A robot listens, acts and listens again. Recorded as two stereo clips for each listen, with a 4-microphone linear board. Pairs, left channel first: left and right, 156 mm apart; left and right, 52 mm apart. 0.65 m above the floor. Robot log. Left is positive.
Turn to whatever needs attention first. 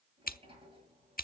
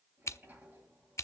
cmd idle
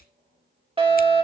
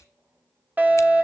note: The fire alarm: about 35° right or 145° right.
cmd yaw -35
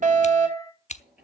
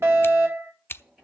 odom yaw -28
note: So it is at 110° right.
cmd yaw -110
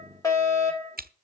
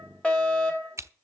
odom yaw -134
note: The fire alarm is now 25° left.
cmd yaw +25
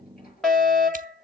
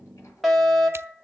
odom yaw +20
end: Facing the fire alarm.